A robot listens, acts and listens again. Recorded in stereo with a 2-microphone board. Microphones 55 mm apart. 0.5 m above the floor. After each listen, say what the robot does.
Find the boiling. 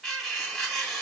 Keep listening.
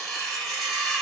Keep listening.
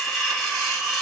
I can't make out boiling to turn to.